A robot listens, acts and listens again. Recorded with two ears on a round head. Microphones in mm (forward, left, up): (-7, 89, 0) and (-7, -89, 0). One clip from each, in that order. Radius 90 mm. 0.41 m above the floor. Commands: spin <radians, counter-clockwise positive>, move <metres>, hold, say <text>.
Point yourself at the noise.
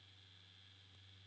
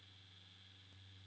hold
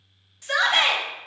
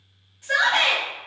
spin 1.13
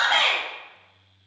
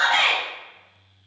spin 0.44
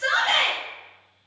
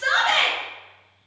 say Facing the shout, 1 to 2 m away.